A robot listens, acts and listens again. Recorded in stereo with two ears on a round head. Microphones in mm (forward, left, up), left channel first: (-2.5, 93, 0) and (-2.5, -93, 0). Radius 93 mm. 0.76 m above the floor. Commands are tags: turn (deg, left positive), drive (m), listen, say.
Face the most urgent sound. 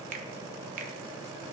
<listen/>
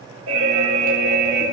<turn deg="-75"/>
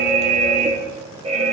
<turn deg="-30"/>
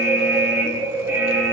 <turn deg="-10"/>
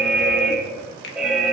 <say>Facing the alarm, 1 to 2 m away.</say>